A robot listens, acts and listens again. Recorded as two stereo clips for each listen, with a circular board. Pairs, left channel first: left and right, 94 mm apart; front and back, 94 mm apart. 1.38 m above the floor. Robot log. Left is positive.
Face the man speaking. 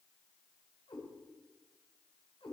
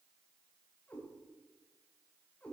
cmd idle
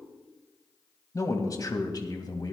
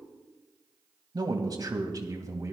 note: The man speaking: 130° left.
cmd yaw +130
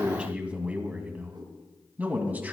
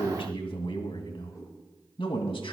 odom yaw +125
note: The man speaking is now 20° right.
cmd yaw -20
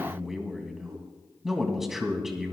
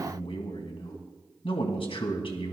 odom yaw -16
end: Facing the man speaking.